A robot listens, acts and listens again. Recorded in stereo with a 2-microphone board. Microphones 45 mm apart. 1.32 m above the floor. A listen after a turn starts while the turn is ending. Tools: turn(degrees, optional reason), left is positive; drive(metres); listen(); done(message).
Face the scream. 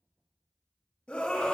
turn(degrees=25, reason="The scream: about 25° left or 155° left.")
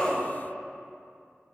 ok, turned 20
listen()
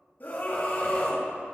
turn(degrees=135, reason="So it is at 135° left.")
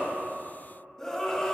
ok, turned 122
turn(degrees=10, reason="The scream is now 10° left.")
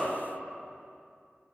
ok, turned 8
listen()
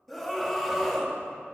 done("Found it: a scream, straight ahead.")